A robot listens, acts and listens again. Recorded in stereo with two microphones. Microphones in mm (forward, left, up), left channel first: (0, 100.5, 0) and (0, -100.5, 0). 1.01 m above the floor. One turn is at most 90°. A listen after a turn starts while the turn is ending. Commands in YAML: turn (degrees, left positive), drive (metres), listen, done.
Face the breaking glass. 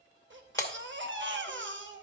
turn: 30
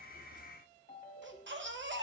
listen: true
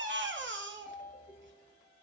done: "I heard breaking glass, but can't make it out now. It was about 15° right or 135° left."